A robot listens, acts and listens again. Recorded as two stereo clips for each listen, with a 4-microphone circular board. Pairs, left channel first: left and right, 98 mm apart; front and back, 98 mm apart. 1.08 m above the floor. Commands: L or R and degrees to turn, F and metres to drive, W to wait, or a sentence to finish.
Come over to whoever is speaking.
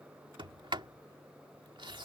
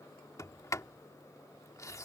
W
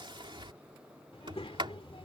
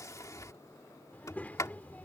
L75
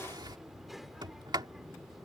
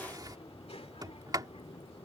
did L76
F1.0
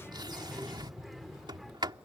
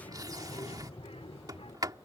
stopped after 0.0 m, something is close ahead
Blocked. The child speaking is further on, straight ahead.